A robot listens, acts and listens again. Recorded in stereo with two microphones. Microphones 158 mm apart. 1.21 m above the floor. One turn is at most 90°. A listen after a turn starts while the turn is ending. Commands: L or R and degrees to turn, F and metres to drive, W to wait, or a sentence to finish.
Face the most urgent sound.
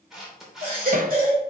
R60
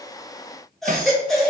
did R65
Found it: a baby crying, straight ahead, 2 to 4 m away.